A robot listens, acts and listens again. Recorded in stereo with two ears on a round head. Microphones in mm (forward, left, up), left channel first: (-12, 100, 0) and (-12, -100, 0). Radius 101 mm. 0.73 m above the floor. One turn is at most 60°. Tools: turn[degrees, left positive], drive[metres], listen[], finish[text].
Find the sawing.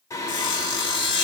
Thought: The sawing: about 55° left or 125° left.
Action: turn[55]
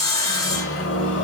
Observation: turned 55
Thought: So it is at 20° left.
Action: turn[20]
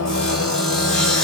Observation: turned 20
Action: finish[Found it: sawing, straight ahead.]